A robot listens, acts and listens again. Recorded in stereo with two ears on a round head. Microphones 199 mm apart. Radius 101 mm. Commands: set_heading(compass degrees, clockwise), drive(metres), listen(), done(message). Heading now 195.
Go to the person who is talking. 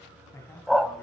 set_heading(165)
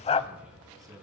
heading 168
set_heading(183)
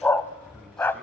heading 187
listen()
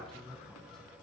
drive(1.0)
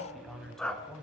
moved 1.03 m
drive(1.0)
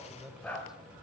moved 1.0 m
drive(1.0)
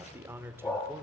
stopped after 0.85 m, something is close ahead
set_heading(202)
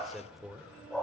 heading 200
done("I am next to the man speaking.")